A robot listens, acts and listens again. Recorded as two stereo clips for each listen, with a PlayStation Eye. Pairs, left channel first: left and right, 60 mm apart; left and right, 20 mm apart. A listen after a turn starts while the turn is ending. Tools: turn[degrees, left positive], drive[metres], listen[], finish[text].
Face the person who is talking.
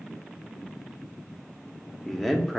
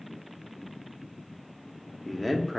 Action: turn[30]
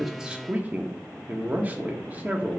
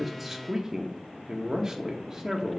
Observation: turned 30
Thought: So it is at 30° right.
Action: turn[-30]
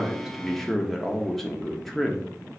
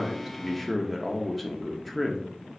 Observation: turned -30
Action: finish[Found it: a man speaking, straight ahead, under 1 m away.]